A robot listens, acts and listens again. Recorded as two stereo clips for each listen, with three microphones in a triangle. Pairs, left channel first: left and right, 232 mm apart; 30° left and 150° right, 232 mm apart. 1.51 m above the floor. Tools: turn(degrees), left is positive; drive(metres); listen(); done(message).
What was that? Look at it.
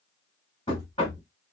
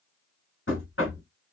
turn(degrees=30)
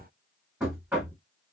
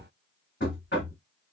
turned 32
done("Found it: knocking, straight ahead, 1 to 2 m away.")